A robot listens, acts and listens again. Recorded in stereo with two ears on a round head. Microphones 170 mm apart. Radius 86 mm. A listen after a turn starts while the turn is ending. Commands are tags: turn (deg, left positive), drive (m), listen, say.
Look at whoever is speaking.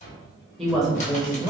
<turn deg="30"/>
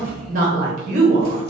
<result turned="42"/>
<turn deg="-40"/>
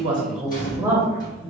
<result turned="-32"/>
<turn deg="-10"/>
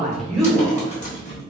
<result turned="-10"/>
<say>Facing the woman speaking.</say>